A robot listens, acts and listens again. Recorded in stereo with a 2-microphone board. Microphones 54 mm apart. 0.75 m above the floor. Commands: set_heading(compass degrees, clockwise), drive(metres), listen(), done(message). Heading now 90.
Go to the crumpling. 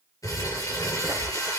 set_heading(0)
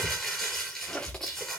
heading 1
set_heading(351)
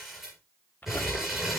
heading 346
drive(1.0)
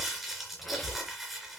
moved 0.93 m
drive(1.0)
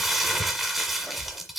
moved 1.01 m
drive(1.0)
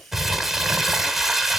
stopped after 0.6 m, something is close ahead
done("I am next to the crumpling.")